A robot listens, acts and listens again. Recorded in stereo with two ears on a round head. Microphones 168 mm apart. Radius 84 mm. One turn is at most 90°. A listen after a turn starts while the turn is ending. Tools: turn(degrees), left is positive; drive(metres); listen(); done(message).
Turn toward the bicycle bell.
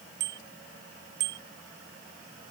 turn(degrees=-60)
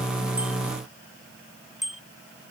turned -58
done("Facing the bicycle bell.")